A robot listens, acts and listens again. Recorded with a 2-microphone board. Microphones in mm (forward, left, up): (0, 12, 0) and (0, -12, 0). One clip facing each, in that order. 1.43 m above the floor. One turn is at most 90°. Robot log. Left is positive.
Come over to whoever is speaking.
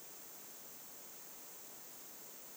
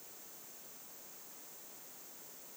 cmd idle
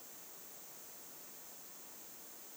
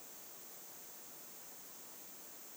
cmd idle
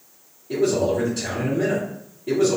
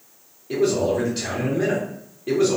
note: The man speaking: about 35° right or 145° right.
cmd yaw -35
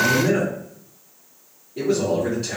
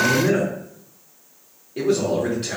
note: So it is at 110° right.
cmd yaw -90
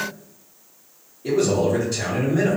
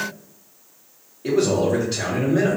note: The man speaking is now 30° right.
cmd yaw -30
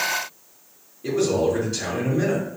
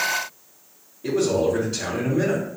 cmd fwd 1.0
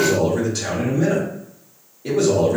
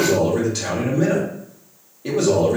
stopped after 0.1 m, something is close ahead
note: The man speaking is now 10° right.
cmd yaw -10
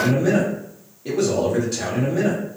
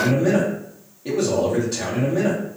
end: Something is in my way. I am facing the man speaking but have not reached it.